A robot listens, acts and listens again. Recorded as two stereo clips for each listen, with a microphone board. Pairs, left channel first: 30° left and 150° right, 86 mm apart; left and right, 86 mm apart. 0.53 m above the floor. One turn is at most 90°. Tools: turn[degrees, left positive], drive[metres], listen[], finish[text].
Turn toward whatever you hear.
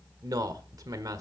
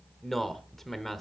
Thought: The man speaking: 175° left.
Action: turn[90]
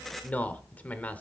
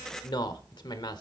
Thought: The man speaking is now 100° left.
Action: turn[90]
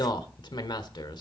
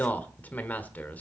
Thought: The man speaking is now 20° left.
Action: turn[20]
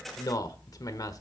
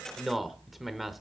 Action: finish[Found it: a man speaking, straight ahead, 1 to 2 m away.]